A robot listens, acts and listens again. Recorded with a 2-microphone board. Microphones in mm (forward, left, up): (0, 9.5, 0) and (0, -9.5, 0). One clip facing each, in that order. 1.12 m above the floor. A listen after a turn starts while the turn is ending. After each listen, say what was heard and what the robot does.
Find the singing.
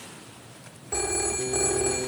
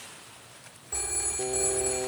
The singing: about 60° right or 120° right. Turn 60° right.
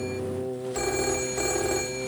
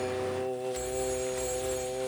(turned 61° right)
So it is at 65° right. Turn 65° right.
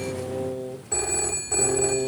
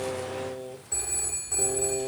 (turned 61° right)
The singing is now 25° right. Turn 25° right.
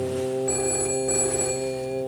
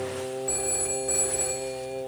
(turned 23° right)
The singing is now 15° right. Turn 15° right.
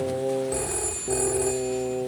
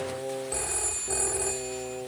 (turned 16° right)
Facing the singing.